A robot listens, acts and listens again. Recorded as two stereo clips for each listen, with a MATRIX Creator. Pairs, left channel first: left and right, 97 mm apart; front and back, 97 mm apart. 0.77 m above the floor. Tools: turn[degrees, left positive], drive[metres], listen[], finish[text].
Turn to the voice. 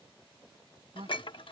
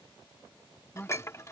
Thought: The man speaking: 75° right.
Action: turn[-75]
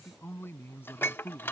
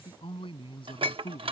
Thought: The man speaking is now 25° left.
Action: turn[25]
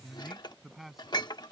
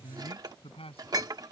Action: finish[Found it: a man speaking, straight ahead.]